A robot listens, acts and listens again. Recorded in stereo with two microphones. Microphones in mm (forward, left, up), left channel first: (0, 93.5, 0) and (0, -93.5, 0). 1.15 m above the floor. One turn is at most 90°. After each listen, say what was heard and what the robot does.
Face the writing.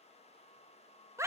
Keep listening.
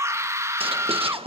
The writing: about 30° right or 150° right. Turn 30° right.
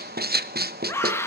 So it is at 120° right. Turn 90° right.
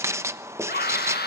The writing is now 15° right. Turn 15° right.
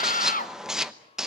Found it: writing, straight ahead.